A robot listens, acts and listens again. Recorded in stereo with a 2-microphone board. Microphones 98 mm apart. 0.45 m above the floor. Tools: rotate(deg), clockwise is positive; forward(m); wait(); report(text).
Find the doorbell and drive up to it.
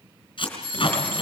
rotate(-55)
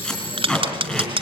wait()
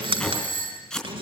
rotate(-60)
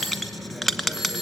forward(1.0)
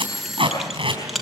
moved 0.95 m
forward(1.0)
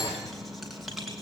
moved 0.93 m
wait()
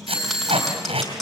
forward(1.0)
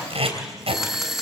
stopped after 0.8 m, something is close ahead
report("Arrived at the doorbell, straight ahead.")